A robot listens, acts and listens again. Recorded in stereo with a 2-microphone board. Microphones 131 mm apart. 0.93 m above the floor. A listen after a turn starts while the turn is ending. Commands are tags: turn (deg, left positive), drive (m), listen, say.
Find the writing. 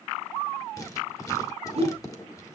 <turn deg="25"/>
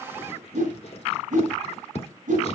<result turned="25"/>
<turn deg="125"/>
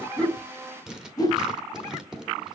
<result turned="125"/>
<say>Found it: writing, straight ahead, 1 to 2 m away.</say>